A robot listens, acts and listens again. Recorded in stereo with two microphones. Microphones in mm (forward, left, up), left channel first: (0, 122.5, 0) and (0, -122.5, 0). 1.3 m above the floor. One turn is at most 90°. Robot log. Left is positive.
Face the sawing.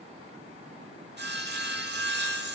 note: The sawing: about 45° right or 135° right.
cmd yaw -45
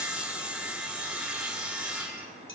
end: Found it: sawing, straight ahead, 1 to 2 m away.